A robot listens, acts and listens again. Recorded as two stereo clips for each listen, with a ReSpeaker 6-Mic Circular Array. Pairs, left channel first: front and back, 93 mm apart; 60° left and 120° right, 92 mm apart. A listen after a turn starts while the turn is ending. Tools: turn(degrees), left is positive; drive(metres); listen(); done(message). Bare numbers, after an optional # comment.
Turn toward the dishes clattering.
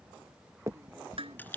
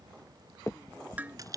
# The dishes clattering: 165° left.
turn(165)
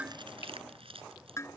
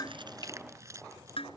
# The dishes clattering is now 60° left.
turn(60)
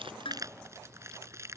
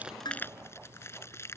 listen()
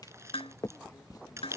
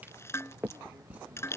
done("Facing the dishes clattering.")